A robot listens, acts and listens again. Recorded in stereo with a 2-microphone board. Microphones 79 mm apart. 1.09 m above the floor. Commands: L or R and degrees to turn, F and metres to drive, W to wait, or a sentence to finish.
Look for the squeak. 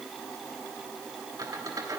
R55
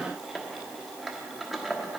Found it: a squeak, straight ahead.